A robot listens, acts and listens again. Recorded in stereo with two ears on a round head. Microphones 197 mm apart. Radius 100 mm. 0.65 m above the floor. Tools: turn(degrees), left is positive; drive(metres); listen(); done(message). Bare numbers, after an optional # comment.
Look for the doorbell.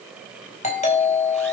# The doorbell: about 35° left or 145° left.
turn(35)
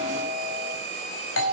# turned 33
# So it is at 115° left.
turn(115)
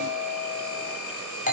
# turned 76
# The doorbell is now 35° left.
turn(35)
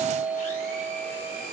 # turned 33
done("Found it: a doorbell, straight ahead, over 4 m away.")